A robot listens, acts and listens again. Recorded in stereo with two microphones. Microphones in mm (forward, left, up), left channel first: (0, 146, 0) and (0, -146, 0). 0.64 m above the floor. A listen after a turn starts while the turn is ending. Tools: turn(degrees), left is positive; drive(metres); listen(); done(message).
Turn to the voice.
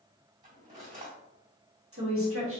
turn(degrees=-50)
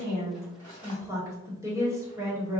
turn(degrees=-10)
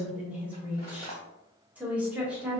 done("Found it: a woman speaking, straight ahead.")